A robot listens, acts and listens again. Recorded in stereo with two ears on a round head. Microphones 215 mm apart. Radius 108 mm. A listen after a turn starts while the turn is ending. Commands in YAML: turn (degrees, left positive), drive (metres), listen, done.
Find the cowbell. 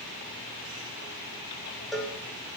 turn: 30
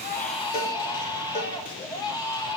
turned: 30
listen: true
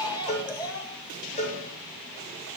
turn: 150
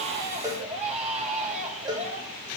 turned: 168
turn: -20
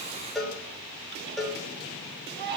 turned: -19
done: "Facing the cowbell."